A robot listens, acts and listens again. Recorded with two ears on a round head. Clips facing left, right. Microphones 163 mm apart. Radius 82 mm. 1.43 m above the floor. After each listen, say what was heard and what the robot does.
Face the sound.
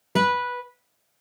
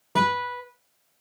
The guitar: about 25° left or 155° left. Turn 25° left.
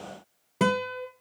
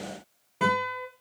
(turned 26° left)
So it is at 125° left. Turn 125° left.
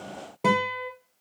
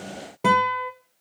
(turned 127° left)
Found it: a guitar, straight ahead.